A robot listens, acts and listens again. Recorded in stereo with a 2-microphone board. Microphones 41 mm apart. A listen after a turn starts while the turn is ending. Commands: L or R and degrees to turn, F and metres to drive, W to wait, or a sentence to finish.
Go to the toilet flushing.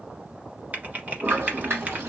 R90
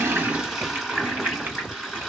F1.0
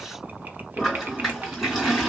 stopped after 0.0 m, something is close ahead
Blocked. The toilet flushing is further on, straight ahead.